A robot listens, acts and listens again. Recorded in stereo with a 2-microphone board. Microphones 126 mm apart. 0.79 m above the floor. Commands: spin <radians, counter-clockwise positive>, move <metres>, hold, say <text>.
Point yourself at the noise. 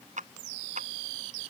spin -1.57
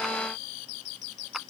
hold
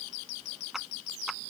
say Found it: a clap, straight ahead.